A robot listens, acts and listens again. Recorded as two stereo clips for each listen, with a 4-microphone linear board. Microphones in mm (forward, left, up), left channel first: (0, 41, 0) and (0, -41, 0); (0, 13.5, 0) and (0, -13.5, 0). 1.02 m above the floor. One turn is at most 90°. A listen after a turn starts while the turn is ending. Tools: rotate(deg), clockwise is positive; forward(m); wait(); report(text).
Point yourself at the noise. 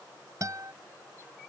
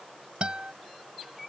rotate(45)
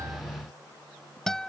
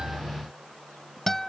report("Found it: a guitar, straight ahead.")